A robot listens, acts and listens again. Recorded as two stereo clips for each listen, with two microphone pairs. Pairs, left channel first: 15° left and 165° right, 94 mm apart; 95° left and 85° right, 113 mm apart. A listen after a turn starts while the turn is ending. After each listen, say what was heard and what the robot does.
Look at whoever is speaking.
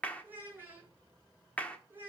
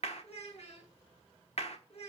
The child speaking: 125° left. Turn 125° left.
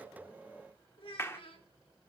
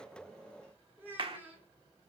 The child speaking is now 15° right. Turn 15° right.
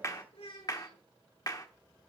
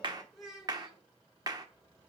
Facing the child speaking.